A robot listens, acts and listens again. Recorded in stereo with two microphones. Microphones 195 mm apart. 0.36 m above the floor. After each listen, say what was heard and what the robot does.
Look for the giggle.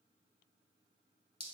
Keep listening.
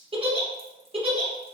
The giggle: about 30° right or 150° right. Turn 30° right.
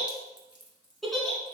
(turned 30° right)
Facing the giggle.